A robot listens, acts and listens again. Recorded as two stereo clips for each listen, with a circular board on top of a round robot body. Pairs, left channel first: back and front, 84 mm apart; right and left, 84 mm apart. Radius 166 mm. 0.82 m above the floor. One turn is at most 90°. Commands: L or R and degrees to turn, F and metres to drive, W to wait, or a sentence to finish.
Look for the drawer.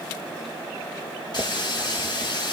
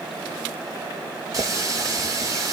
W
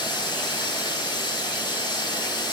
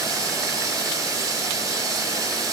W
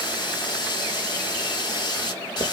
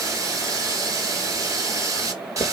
I can't make out a drawer, only a running tap.